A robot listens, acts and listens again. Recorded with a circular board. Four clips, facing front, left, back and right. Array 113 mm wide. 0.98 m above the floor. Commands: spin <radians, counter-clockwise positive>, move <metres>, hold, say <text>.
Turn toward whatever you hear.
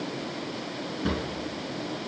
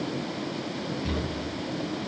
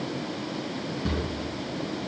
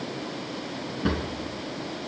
spin -1.31
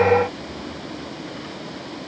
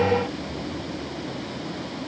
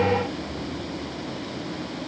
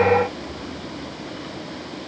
hold
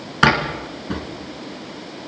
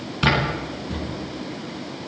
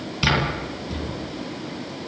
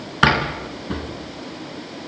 spin -0.70
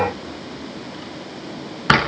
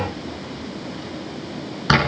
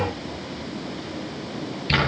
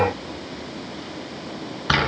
spin 0.17
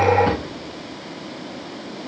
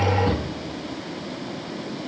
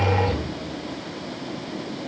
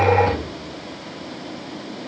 hold
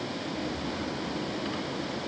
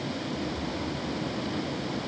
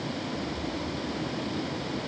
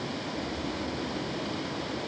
hold
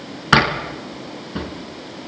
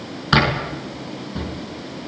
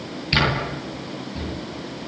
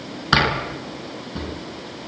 say Facing the drawer, over 4 m away.